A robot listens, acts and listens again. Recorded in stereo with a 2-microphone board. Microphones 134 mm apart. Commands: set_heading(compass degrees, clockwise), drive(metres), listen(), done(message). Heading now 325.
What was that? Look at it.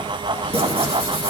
set_heading(10)
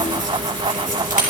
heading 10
listen()
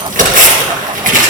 set_heading(95)
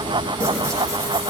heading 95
listen()
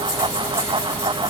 listen()
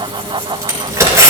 set_heading(115)
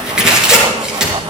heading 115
done("Facing the tearing paper, 2 to 4 m away.")